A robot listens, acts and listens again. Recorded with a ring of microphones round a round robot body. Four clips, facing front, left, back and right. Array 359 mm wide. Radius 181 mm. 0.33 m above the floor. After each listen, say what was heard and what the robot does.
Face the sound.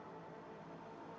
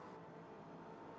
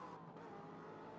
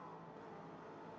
Keep listening.
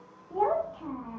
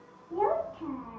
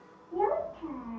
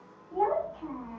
The child speaking: 30° left. Turn 30° left.
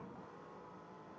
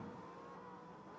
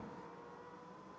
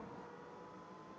Keep listening.
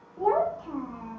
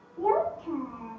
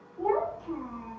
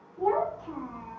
The child speaking is now 20° left. Turn 20° left.
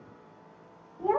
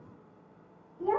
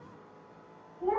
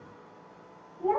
Facing the child speaking, under 1 m away.